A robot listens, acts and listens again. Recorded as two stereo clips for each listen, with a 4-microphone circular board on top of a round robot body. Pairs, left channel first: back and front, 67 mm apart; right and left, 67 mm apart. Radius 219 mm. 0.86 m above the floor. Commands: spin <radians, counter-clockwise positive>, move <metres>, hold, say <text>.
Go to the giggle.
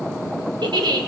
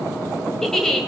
move 1.0
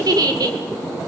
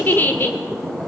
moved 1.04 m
spin -0.44
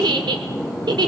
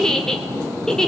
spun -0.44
spin -0.17
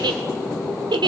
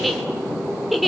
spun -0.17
move 1.0
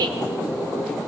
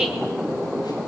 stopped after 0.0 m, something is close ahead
say I am next to the giggle.